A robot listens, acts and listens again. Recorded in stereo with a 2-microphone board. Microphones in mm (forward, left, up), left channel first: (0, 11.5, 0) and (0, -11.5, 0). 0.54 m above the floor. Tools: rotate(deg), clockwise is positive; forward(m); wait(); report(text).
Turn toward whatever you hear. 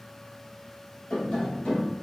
rotate(-75)
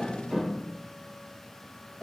report("Found it: tapping, straight ahead, 1 to 2 m away.")